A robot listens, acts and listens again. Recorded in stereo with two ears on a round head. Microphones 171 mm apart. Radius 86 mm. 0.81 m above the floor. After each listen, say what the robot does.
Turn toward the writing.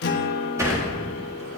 Keep listening.
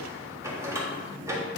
Keep listening.
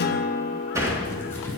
Turn 30° left.
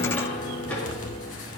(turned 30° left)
Turn 135° left.
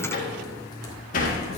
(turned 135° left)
Turn 20° left.
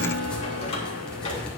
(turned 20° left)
Found it: writing, straight ahead.